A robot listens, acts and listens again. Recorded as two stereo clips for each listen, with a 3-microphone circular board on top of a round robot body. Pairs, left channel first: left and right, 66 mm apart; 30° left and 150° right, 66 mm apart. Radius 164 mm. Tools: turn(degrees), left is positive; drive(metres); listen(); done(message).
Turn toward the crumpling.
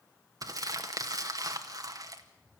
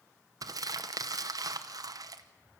turn(degrees=-120)
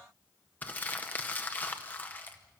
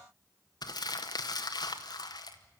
turn(degrees=20)
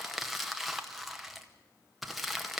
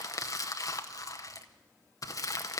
done("Found it: crumpling, straight ahead.")